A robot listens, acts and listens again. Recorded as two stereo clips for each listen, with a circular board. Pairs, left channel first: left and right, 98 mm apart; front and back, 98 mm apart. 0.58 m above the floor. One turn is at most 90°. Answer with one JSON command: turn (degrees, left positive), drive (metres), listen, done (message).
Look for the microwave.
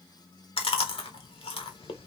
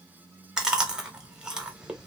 {"listen": true}
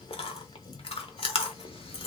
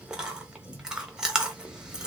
{"listen": true}
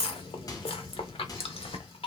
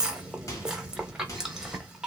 {"turn": 45}
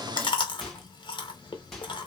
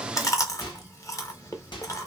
{"done": "Found it: a microwave, straight ahead."}